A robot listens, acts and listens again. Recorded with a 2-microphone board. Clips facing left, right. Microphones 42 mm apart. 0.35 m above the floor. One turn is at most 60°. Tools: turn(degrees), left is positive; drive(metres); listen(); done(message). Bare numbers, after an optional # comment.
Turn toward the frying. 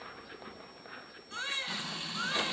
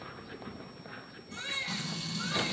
# The frying: about 25° left or 155° left.
turn(25)
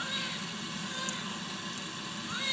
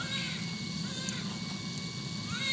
# So it is at 125° left.
turn(60)
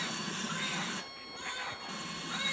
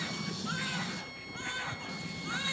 # The frying is now 55° left.
turn(55)
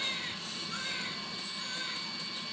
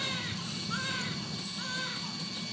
# The frying is now 10° left.
turn(10)
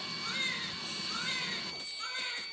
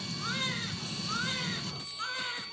done("Found it: frying, straight ahead.")